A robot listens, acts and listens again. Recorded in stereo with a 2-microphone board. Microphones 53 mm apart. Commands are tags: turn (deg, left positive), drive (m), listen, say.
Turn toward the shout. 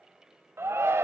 <turn deg="-55"/>
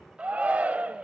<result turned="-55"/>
<turn deg="-35"/>
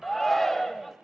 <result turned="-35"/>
<say>Facing the shout, 1 to 2 m away.</say>